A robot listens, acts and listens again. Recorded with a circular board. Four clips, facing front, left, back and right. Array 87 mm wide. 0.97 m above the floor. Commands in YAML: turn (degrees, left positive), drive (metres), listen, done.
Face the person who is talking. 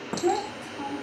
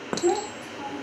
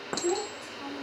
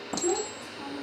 turn: 35
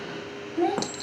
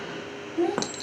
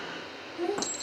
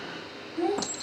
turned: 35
turn: 10
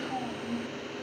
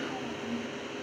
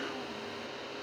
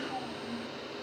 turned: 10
done: "Found it: a child speaking, straight ahead."